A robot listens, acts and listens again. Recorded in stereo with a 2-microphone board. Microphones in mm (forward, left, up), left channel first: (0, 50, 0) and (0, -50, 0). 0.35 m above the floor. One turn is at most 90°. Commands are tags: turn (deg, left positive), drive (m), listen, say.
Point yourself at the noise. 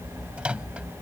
<turn deg="-30"/>
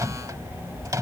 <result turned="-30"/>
<turn deg="-90"/>
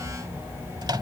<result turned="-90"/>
<turn deg="-55"/>
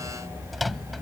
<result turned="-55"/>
<say>Facing the microwave.</say>